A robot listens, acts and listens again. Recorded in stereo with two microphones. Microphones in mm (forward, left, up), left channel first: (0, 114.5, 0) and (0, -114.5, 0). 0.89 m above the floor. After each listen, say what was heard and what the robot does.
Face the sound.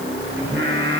The singing: about 55° right or 125° right. Turn 55° right.
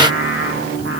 So it is at 70° right. Turn 70° right.
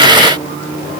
The singing is now 25° right. Turn 25° right.
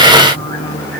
Facing the singing.